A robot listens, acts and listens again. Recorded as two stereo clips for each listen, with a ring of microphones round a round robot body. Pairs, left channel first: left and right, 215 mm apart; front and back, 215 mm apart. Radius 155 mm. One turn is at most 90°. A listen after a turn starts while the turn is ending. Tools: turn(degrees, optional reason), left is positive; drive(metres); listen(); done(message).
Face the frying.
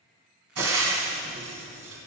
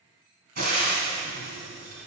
turn(degrees=-90, reason="The frying: 120° right.")
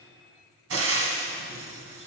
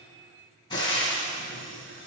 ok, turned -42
turn(degrees=-75, reason="The frying is now 75° right.")
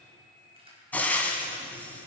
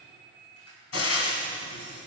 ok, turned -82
done("Facing the frying, 1 to 2 m away.")